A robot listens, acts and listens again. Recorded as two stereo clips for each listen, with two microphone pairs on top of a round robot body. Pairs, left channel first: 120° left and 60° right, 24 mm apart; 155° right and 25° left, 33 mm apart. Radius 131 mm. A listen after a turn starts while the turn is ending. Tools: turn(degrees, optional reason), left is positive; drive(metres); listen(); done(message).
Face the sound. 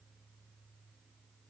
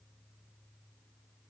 listen()
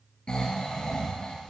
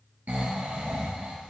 turn(degrees=65, reason="The snoring: 65° left.")
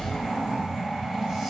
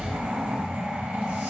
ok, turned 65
turn(degrees=10, reason="The snoring is now 10° left.")
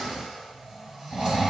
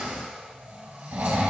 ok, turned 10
done("Found it: snoring, straight ahead, 2 to 4 m away.")